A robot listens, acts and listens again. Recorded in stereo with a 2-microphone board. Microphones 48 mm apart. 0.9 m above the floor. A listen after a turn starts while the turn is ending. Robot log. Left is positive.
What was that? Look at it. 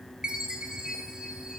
note: The chime: about 15° right or 165° right.
cmd yaw -15
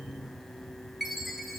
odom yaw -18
end: Found it: a chime, straight ahead.